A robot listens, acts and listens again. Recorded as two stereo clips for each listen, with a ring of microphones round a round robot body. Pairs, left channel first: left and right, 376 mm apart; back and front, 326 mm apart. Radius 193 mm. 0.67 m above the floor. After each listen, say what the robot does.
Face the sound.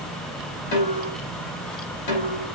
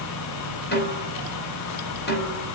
Turn 120° left.
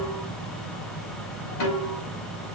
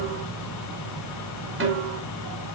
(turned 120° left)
Turn 50° left.
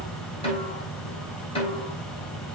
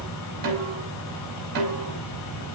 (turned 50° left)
Turn 15° left.
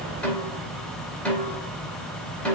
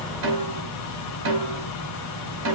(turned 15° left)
Facing the snare drum, over 4 m away.